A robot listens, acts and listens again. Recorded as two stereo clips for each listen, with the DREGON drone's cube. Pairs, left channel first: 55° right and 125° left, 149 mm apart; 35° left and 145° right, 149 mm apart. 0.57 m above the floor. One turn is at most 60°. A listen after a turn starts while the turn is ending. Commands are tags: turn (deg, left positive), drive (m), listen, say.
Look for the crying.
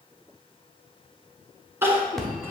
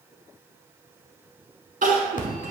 <turn deg="-60"/>
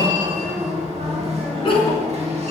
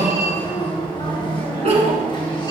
<turn deg="-60"/>
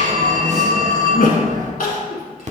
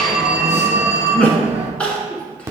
<turn deg="-45"/>
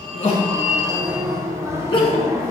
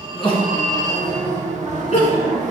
<say>Found it: crying, straight ahead.</say>